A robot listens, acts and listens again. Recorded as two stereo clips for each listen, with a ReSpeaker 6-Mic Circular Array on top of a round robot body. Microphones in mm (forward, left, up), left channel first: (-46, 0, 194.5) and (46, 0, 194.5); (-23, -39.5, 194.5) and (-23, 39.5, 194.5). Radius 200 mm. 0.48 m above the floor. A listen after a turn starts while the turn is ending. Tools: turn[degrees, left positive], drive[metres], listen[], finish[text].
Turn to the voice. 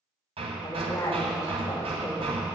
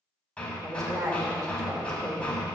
Thought: The woman speaking: 130° left.
Action: turn[130]
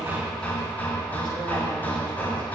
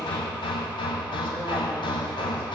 Action: listen[]
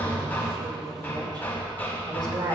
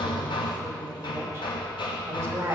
Thought: The woman speaking is now 35° left.
Action: turn[35]
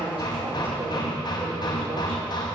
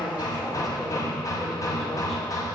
Action: finish[Found it: a woman speaking, straight ahead, 2 to 4 m away.]